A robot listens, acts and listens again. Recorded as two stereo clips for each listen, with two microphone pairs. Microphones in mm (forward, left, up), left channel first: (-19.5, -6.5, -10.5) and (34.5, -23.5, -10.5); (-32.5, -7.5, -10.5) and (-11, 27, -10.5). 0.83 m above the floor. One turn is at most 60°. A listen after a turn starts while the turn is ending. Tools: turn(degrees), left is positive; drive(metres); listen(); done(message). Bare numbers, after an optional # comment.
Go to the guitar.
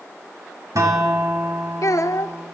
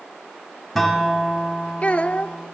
# The guitar: 35° right.
turn(-35)
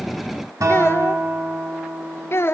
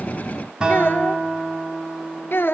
# The guitar is now 10° right.
turn(-10)
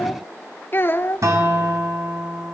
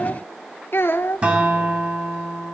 drive(1.0)
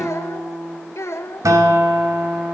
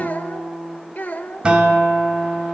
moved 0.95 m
drive(1.0)
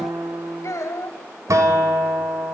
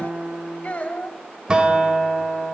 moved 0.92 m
# The guitar is now 10° right.
turn(-10)
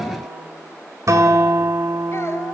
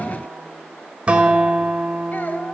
drive(1.0)
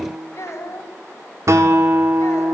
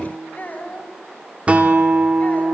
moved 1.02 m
drive(1.0)
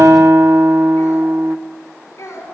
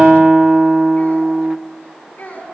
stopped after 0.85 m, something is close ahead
done("Arrived at the guitar, straight ahead.")